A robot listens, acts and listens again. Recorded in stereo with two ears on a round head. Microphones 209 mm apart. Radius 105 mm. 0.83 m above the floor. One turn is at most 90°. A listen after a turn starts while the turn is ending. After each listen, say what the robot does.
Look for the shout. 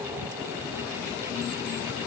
Keep listening.
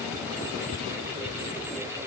Keep listening.
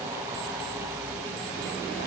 I can't make out a shout.